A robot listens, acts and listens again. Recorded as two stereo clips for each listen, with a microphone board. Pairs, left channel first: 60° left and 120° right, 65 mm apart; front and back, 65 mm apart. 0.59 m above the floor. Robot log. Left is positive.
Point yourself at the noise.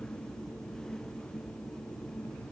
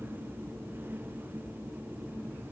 cmd idle
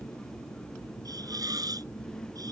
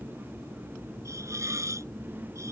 note: The hiss: 140° right.
cmd yaw -140
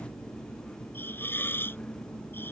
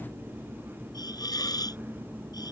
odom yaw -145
end: Facing the hiss.